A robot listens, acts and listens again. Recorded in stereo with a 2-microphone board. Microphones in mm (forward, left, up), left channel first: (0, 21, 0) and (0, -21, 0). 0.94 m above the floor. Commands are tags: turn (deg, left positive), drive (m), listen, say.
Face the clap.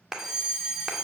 <turn deg="-30"/>
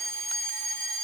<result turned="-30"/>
<listen/>
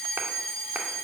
<listen/>
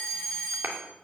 <turn deg="-135"/>
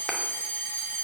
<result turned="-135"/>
<listen/>
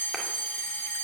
<listen/>
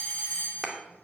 <say>Found it: a clap, straight ahead.</say>